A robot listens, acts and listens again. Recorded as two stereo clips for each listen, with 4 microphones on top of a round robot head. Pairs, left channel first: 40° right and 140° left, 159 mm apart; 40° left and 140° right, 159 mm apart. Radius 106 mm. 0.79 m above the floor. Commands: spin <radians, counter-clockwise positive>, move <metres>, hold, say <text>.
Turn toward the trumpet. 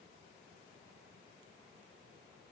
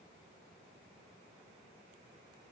hold
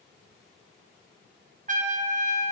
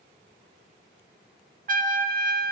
spin -3.05
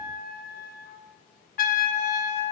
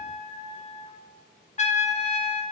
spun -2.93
spin -0.17
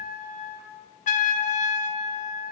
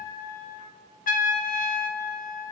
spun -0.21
say Facing the trumpet.